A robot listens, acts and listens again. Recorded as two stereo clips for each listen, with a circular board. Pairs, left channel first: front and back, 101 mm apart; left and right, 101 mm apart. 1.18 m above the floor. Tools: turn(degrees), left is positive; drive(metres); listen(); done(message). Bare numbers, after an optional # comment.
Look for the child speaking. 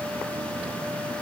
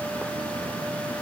listen()
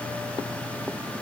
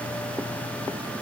listen()
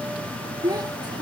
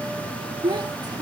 # The child speaking: 130° right.
turn(-130)
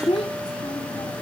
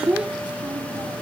# The child speaking is now 10° right.
turn(-10)
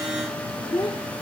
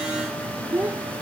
# The child speaking is now 20° right.
turn(-20)
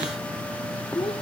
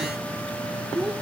done("Facing the child speaking.")